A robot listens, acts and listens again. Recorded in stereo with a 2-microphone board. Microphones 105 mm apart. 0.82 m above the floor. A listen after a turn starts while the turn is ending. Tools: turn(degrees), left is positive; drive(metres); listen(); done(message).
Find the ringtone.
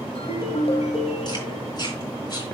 turn(degrees=70)
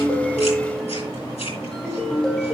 done("Found it: a ringtone, straight ahead, 2 to 4 m away.")